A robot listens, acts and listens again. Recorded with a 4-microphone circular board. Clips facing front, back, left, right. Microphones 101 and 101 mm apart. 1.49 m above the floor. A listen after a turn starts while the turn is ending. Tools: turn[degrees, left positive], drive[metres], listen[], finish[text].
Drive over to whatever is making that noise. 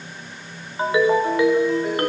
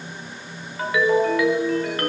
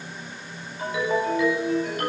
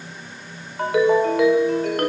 Thought: The ringtone: 65° right.
Action: turn[-65]
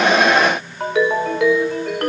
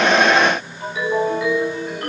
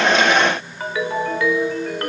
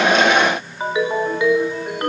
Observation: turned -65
Thought: The ringtone is now 20° right.
Action: turn[-20]
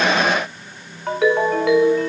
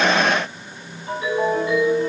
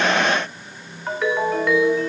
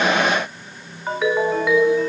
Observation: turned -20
Action: drive[1.0]
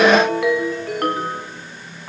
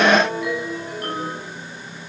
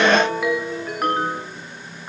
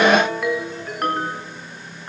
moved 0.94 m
Action: drive[1.0]
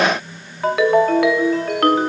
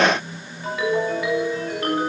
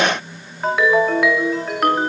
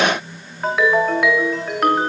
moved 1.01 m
Action: drive[1.0]
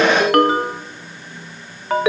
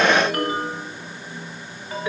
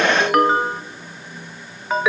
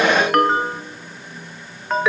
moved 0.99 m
Action: drive[1.0]
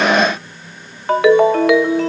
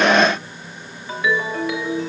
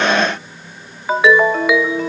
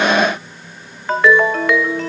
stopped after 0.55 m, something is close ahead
Thought: The ringtone is now 10° left.
Action: turn[10]
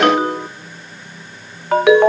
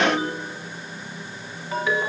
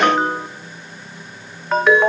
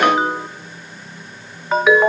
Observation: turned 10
Action: finish[Arrived at the ringtone, straight ahead.]